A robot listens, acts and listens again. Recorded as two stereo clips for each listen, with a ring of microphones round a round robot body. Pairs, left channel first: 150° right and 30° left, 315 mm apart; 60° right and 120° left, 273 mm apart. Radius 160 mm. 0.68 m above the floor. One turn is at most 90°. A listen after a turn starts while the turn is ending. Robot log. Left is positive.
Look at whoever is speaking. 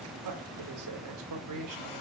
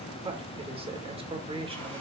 note: The man speaking: 50° left.
cmd yaw +50
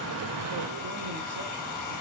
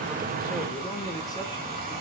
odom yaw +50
cmd idle
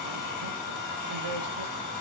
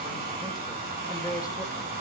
cmd idle
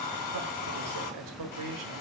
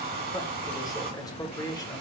note: The man speaking is now 15° left.
cmd yaw +15
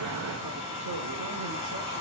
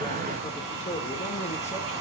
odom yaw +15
cmd idle
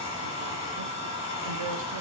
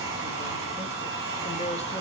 cmd idle
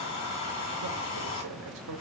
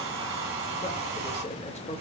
end: Found it: a man speaking, straight ahead, 2 to 4 m away.